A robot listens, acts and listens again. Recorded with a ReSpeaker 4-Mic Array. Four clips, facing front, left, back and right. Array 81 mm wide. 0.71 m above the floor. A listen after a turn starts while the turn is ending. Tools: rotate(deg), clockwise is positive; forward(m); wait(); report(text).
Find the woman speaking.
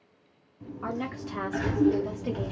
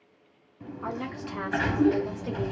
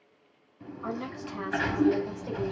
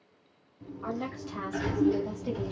rotate(-25)
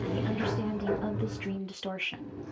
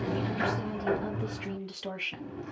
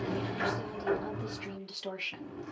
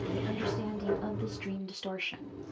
report("Facing the woman speaking, 1 to 2 m away.")